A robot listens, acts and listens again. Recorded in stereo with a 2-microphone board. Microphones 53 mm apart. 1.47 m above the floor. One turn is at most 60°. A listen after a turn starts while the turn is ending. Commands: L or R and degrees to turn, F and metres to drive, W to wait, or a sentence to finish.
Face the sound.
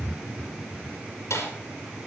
L60
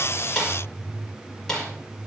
L10
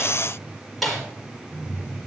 Found it: a snare drum, straight ahead.